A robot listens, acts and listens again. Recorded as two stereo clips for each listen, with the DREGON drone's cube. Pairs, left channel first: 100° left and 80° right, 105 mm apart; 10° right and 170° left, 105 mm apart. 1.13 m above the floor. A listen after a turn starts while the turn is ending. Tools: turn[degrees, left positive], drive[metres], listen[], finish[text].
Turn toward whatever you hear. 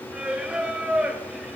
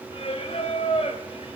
Action: finish[Found it: singing, straight ahead, 2 to 4 m away.]